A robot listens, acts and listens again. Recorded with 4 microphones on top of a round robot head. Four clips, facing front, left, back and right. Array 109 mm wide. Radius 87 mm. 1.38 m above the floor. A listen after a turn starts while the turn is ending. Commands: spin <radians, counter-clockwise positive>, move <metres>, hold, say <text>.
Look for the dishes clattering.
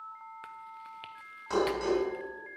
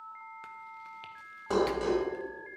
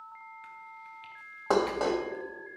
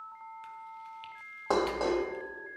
spin -2.53
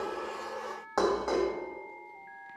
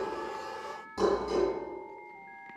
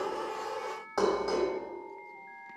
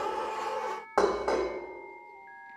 spin -1.22
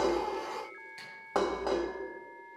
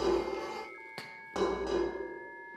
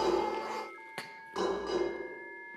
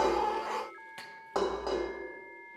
spin -0.44
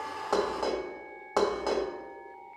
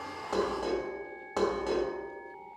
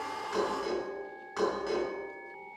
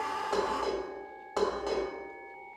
say Found it: dishes clattering, straight ahead.